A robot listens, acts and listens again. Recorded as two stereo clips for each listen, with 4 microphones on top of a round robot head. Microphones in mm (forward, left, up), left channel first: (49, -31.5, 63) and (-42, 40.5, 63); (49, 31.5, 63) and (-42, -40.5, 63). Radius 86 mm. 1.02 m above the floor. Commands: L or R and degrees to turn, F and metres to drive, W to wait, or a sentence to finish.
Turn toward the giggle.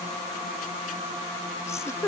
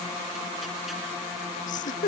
L30
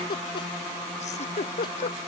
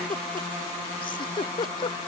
R10
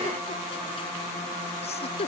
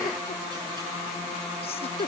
Found it: a giggle, straight ahead.